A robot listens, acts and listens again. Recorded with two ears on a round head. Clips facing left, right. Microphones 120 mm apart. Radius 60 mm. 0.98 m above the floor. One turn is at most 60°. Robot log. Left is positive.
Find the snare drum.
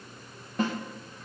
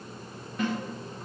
note: The snare drum: about 30° left or 150° left.
cmd yaw +30
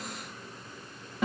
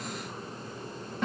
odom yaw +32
end: Facing the snare drum, under 1 m away.